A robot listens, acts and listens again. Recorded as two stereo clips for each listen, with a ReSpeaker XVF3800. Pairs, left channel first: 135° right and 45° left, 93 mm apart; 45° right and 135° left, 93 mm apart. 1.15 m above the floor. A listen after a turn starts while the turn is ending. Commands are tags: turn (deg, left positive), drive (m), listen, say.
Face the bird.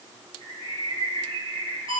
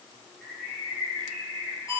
<turn deg="45"/>
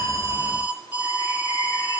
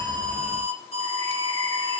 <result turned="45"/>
<listen/>
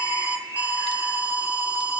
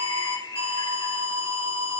<say>Facing the bird, over 4 m away.</say>